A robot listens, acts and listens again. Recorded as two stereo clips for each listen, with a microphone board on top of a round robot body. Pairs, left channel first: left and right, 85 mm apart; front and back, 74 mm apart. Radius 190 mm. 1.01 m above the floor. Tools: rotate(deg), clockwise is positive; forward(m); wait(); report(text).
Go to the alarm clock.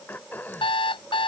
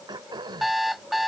rotate(-90)
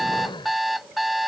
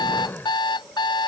forward(1.0)
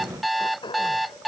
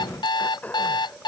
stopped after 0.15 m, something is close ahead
report("Blocked. The alarm clock is further on, straight ahead.")